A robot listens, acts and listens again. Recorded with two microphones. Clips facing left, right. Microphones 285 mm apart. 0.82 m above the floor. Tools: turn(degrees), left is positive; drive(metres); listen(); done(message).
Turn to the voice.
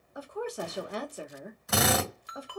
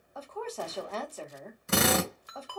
turn(degrees=30)
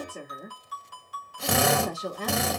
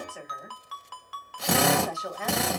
turn(degrees=135)
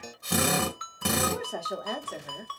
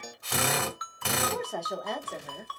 done("Facing the woman speaking.")